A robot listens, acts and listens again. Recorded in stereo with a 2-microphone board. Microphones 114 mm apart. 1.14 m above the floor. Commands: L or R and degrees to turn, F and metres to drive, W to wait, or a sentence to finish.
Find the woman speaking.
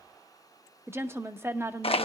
R20
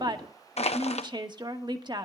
R140
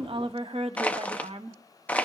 R55
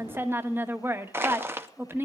R20
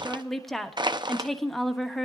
Facing the woman speaking, 1 to 2 m away.